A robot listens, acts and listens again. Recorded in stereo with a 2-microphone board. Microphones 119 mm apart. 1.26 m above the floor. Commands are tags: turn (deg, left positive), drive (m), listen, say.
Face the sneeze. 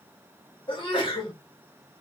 <turn deg="45"/>
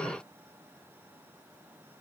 <listen/>
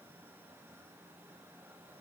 <say>I heard a sneeze, but can't make it out now. It was about straight ahead or 90° left.</say>